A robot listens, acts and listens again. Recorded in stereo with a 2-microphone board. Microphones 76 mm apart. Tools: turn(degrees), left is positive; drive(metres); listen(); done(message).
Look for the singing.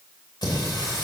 turn(degrees=70)
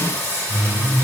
turn(degrees=30)
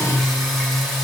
done("Facing the singing, 2 to 4 m away.")